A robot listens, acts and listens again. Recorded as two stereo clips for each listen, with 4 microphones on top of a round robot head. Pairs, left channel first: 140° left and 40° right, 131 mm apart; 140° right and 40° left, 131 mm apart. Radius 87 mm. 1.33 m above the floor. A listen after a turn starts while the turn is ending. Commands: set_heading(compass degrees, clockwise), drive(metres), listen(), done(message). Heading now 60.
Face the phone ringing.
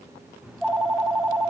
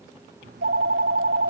set_heading(15)
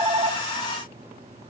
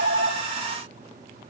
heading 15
set_heading(5)
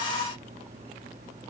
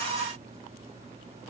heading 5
done("Found it: a phone ringing, straight ahead, 1 to 2 m away.")